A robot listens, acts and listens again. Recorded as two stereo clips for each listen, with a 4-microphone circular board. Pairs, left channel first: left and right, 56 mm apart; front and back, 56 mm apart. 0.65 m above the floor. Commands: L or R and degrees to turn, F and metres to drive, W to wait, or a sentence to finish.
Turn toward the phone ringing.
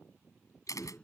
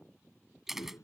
W
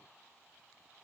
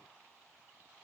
W
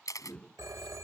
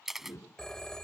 R80
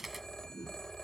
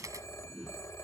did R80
L10
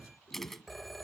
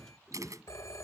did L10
Facing the phone ringing.